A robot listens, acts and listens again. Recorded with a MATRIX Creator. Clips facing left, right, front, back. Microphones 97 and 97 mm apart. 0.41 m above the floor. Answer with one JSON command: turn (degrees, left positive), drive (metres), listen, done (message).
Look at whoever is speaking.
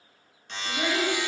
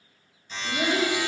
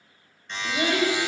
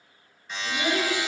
{"done": "Facing the child speaking."}